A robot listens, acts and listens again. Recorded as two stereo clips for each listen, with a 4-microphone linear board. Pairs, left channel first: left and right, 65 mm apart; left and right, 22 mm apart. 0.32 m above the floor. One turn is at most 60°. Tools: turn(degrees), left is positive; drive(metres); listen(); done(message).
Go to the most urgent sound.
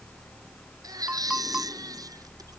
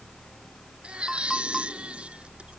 turn(degrees=-60)
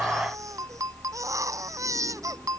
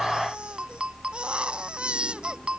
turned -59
turn(degrees=-50)
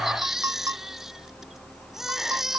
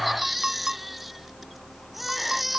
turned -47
drive(metres=1.0)
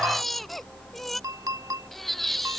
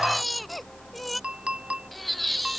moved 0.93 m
drive(metres=1.0)
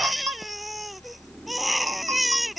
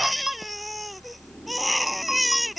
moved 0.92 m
drive(metres=1.0)
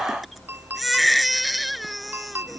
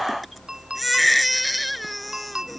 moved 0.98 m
drive(metres=1.0)
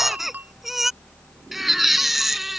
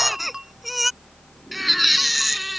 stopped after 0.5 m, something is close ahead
done("Arrived at the baby crying, straight ahead.")